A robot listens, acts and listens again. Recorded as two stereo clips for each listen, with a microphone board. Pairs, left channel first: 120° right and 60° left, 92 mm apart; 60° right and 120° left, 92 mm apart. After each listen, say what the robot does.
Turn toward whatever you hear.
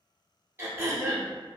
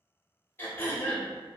Found it: throat clearing, straight ahead.